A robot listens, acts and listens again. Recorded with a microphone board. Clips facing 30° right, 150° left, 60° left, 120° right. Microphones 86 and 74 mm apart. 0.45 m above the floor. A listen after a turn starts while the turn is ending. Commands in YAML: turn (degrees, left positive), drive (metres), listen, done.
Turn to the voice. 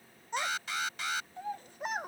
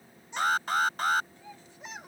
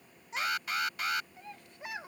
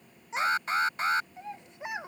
turn: -55
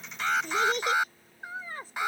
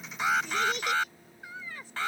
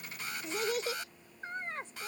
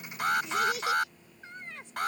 turn: 15
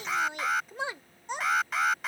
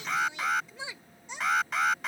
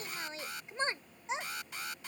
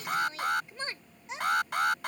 done: "Facing the child speaking."